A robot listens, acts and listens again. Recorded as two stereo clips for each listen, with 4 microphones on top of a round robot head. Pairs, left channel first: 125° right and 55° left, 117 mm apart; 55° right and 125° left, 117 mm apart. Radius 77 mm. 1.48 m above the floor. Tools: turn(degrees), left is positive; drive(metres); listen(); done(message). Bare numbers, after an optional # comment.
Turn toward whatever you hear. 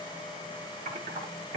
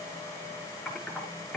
# The typing on a keyboard: 30° left.
turn(30)
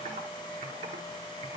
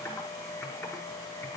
# The typing on a keyboard is now 20° left.
turn(20)
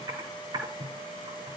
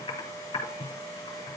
done("Found it: typing on a keyboard, straight ahead, over 4 m away.")